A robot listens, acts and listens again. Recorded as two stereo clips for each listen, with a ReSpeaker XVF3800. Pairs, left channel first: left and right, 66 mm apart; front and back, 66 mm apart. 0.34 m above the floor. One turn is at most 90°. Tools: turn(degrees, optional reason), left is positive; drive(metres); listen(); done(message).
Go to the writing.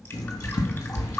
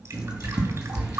turn(degrees=90, reason="The writing: 100° left.")
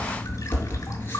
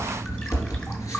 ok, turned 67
turn(degrees=35, reason="The writing is now 35° left.")
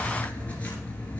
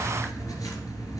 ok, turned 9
turn(degrees=25, reason="The writing is now 25° left.")
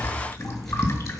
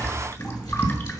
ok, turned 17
drive(metres=1.0)
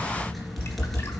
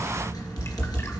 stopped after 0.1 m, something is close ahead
done("Blocked. The writing is further on, straight ahead.")